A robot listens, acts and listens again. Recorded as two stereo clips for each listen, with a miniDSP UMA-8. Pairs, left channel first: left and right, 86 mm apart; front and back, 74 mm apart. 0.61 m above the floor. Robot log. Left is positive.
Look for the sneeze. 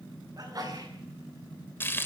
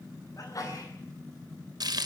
note: The sneeze: 45° right.
cmd yaw -45
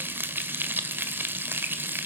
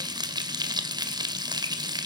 end: Facing where the sneeze came from. I can't hear it now.